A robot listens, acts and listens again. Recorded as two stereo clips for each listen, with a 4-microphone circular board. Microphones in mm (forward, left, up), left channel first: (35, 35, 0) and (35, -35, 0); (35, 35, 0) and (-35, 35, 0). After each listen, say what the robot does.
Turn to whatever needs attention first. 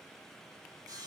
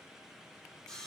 Keep listening.
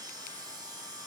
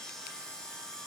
Keep listening.
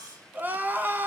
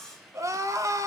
Turn 150° right.
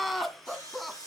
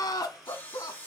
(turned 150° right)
Found it: crying, straight ahead.